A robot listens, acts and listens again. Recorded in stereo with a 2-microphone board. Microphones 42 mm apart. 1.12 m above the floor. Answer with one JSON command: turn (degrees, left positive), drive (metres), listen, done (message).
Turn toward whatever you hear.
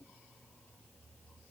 {"listen": true}
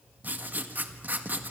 {"turn": -50}
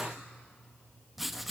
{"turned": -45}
{"done": "Facing the writing, 1 to 2 m away."}